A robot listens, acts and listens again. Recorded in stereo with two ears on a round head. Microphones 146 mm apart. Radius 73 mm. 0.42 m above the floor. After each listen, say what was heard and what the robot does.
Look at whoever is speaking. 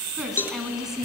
Turn 30° right.
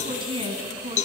So it is at 145° right. Turn 145° right.
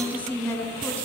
The woman speaking is now 10° left. Turn 10° left.
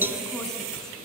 Keep listening.
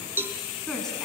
Found it: a woman speaking, straight ahead, over 4 m away.